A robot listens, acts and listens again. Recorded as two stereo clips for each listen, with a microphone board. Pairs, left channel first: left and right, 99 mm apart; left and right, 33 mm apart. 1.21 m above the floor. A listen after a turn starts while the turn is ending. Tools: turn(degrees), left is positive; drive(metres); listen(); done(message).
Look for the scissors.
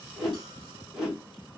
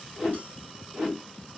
listen()
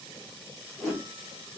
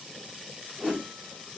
listen()
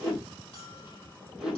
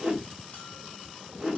done("I can't make out scissors to turn to.")